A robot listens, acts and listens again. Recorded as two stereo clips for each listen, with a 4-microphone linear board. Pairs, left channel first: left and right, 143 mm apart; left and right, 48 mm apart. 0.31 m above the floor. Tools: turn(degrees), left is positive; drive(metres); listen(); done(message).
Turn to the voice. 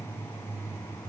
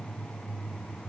listen()
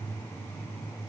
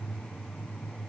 listen()
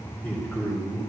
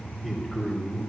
turn(degrees=30)
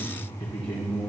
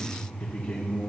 turn(degrees=135)
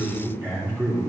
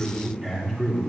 turn(degrees=-15)
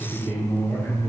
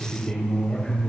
turn(degrees=-10)
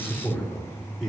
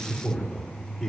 done("Facing the man speaking.")